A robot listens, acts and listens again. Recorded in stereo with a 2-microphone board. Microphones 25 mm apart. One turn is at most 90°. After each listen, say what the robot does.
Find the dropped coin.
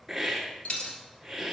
Turn 50° left.
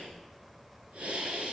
Keep listening.
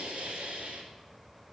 I heard a dropped coin, but can't make it out now. It was about straight ahead or 80° left.